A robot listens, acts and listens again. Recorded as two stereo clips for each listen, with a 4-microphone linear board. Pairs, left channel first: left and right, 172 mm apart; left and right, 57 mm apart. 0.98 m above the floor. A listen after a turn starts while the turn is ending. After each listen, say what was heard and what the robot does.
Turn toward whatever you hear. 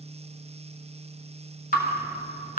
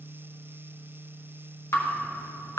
The dripping: about 50° left or 130° left. Turn 50° left.
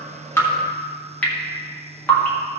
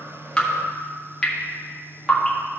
So it is at 10° left. Turn 10° left.
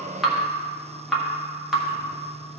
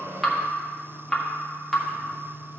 Facing the dripping.